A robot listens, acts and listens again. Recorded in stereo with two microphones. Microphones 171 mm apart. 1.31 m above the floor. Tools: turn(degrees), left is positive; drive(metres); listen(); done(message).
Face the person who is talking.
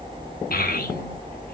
turn(degrees=60)
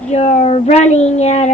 turn(degrees=45)
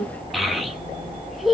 done("Facing the child speaking, 1 to 2 m away.")